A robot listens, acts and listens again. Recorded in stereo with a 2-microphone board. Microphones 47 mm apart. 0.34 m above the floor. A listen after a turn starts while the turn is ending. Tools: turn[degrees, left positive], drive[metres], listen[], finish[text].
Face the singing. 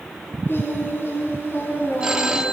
Thought: The singing: about 55° left or 125° left.
Action: turn[55]
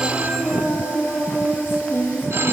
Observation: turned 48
Thought: So it is at 50° left.
Action: turn[50]
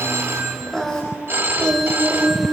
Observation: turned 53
Action: finish[Facing the singing, 1 to 2 m away.]